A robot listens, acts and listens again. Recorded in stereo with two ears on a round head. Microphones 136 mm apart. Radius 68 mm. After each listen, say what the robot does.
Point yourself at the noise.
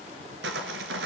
Turn 90° right.
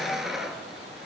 Found it: sawing, straight ahead, 1 to 2 m away.